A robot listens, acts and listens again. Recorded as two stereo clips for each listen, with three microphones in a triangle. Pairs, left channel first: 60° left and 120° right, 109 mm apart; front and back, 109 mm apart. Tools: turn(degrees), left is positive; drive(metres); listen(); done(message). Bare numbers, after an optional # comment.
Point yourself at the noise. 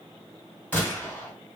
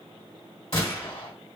# The gunshot: 10° right.
turn(-10)
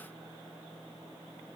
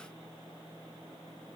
done("I heard a gunshot from this way, but can't make it out now.")